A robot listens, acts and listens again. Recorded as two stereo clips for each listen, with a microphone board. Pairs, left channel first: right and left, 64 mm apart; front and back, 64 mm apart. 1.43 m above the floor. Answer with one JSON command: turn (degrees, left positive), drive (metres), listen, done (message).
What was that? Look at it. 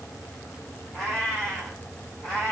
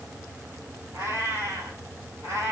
{"turn": -170}
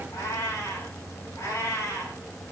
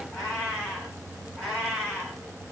{"turn": -75}
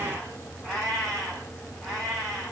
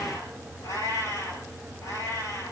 {"done": "Found it: a cat meowing, straight ahead."}